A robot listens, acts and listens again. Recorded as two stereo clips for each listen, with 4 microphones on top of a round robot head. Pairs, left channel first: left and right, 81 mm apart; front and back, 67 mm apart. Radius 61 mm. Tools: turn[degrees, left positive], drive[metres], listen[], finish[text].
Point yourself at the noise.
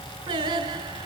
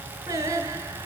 Thought: The singing: 125° right.
Action: turn[-125]
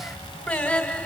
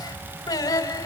Thought: The singing is now 25° left.
Action: turn[25]
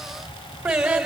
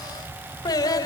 Thought: The singing is now 10° right.
Action: turn[-10]
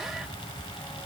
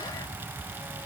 Action: listen[]
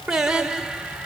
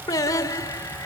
Thought: The singing is now 10° right.
Action: turn[-10]
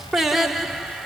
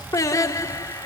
Action: finish[Found it: singing, straight ahead.]